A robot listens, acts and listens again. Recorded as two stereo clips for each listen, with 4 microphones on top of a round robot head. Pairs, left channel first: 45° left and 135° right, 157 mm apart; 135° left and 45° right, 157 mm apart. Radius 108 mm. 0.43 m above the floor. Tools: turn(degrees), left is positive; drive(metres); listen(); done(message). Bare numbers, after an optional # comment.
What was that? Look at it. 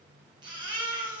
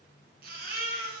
# The baby crying: 75° right.
turn(-75)
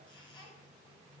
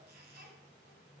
listen()
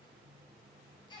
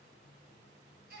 # The baby crying is now 20° right.
turn(-20)
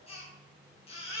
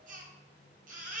# The baby crying is now 10° right.
turn(-10)
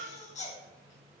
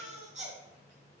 done("Facing the baby crying.")